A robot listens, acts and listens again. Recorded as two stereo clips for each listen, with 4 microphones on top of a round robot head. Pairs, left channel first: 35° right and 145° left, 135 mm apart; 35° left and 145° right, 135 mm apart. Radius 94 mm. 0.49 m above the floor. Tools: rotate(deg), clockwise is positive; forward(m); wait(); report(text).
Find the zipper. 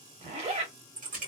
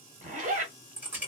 rotate(175)
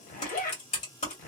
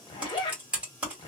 rotate(20)
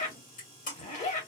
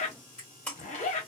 report("Facing the zipper.")